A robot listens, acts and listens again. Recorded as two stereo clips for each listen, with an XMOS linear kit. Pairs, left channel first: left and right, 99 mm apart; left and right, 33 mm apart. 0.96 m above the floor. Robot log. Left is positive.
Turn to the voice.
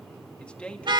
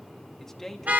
cmd yaw +30
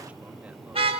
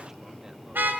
cmd idle
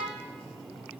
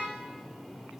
cmd idle
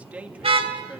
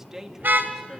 note: So it is at 15° right.
cmd yaw -15
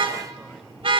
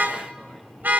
cmd idle
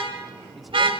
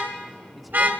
cmd idle
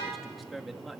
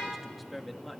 end: Found it: a man speaking, straight ahead, 1 to 2 m away.